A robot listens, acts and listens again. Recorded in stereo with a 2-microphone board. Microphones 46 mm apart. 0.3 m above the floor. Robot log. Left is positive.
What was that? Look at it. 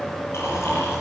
cmd yaw +90
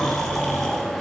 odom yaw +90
end: Found it: snoring, straight ahead.